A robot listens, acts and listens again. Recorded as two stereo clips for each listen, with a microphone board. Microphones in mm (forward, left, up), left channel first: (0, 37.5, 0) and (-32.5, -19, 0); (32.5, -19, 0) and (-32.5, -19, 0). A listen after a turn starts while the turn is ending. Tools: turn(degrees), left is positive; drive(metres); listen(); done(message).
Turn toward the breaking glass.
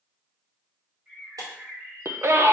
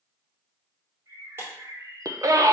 turn(degrees=-130)
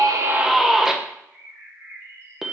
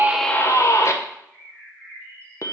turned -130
done("I heard breaking glass from this way, but can't make it out now.")